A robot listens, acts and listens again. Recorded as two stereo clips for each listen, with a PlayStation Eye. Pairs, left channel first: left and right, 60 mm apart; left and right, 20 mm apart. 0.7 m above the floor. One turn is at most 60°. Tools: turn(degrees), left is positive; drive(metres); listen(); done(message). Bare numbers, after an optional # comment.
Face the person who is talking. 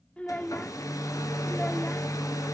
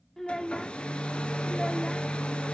# The child speaking: about 20° left or 160° left.
turn(20)
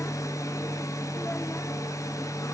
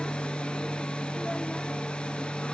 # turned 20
listen()
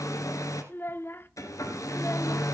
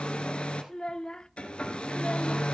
# So it is at 140° left.
turn(60)
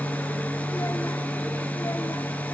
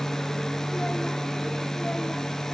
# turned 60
# Nothing new. It was at 80° left.
turn(60)
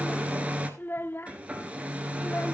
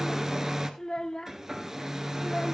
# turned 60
# The child speaking is now 40° left.
turn(40)
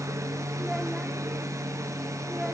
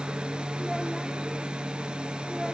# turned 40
listen()
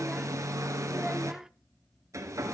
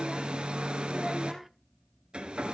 # The child speaking is now 10° right.
turn(-10)
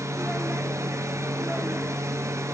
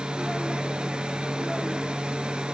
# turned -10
listen()
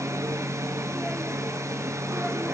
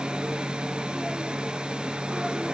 listen()
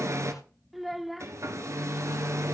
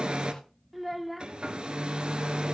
done("Facing the child speaking, under 1 m away.")